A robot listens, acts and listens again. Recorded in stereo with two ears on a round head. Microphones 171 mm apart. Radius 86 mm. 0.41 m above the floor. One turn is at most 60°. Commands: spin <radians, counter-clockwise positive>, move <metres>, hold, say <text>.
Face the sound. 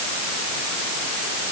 hold
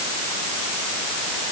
hold
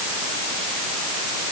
say I can't make out anything.